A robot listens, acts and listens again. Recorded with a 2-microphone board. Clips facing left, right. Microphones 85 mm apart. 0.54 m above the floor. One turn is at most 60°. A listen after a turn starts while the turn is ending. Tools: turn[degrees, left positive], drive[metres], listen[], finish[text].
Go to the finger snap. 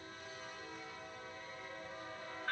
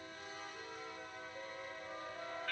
Action: listen[]
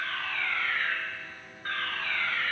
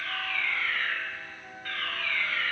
Action: listen[]
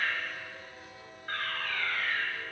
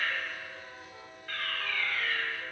Action: finish[I can't make out a finger snap, only a fire alarm.]